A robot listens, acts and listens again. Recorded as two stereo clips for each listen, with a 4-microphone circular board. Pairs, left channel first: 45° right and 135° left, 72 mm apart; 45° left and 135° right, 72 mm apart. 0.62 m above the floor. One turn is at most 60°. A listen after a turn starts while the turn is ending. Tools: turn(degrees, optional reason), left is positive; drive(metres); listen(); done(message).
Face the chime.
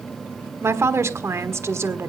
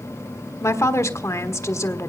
listen()
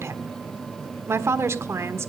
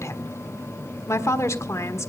listen()
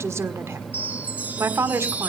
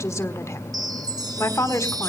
turn(degrees=-60, reason="The chime: 160° right.")
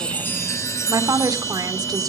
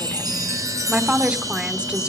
turn(degrees=-60, reason="The chime is now 95° right.")
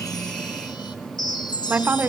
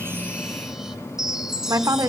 turn(degrees=-50, reason="The chime is now 50° right.")
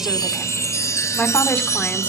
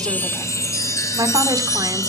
done("Found it: a chime, straight ahead.")